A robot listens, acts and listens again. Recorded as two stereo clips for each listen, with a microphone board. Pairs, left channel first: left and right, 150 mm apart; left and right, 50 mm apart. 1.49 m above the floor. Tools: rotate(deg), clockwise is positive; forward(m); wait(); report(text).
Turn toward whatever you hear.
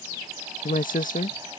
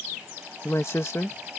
rotate(-65)
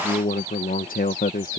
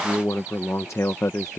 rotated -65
rotate(-80)
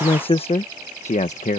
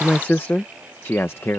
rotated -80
rotate(-55)
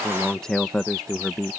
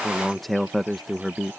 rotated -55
report("Facing the man speaking.")